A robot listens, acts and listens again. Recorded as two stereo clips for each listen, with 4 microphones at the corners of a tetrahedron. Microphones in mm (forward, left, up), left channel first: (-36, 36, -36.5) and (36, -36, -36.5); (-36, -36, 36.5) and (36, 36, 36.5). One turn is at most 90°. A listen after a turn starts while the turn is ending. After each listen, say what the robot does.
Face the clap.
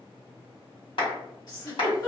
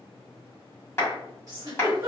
Turn 90° left.
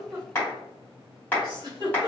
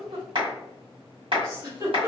Turn 65° left.
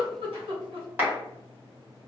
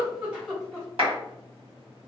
Turn 25° left.
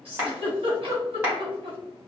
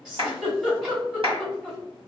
Turn 25° left.
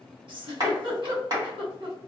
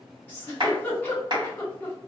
Facing the clap, 1 to 2 m away.